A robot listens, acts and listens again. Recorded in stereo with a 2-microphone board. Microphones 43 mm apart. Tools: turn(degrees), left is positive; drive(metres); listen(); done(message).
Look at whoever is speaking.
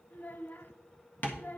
turn(degrees=40)
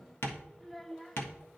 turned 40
done("Facing the child speaking.")